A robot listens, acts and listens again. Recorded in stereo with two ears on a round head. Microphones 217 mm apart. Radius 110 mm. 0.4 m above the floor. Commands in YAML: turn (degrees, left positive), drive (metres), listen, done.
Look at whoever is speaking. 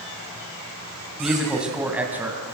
turn: -30
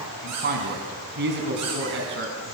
turn: -125
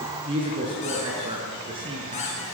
turn: -20
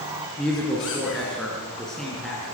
done: "Found it: a woman speaking, straight ahead, over 4 m away."